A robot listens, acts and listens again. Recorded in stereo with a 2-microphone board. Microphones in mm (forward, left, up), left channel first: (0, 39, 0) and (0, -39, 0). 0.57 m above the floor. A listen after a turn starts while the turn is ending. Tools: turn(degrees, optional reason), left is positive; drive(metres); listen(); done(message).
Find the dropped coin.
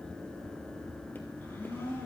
listen()
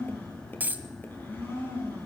turn(degrees=-25, reason="The dropped coin: about 25° right or 155° right.")
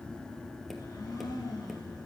listen()
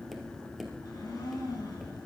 done("I heard a dropped coin, but can't make it out now. It was about straight ahead or 130° right.")